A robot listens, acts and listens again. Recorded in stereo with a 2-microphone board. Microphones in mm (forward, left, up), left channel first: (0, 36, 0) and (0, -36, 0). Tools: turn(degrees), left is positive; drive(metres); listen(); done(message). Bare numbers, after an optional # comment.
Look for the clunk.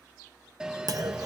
# The clunk: about 55° right or 125° right.
turn(-55)
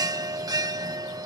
listen()
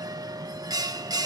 done("I heard a clunk, but can't make it out now. It was about straight ahead or 70° right.")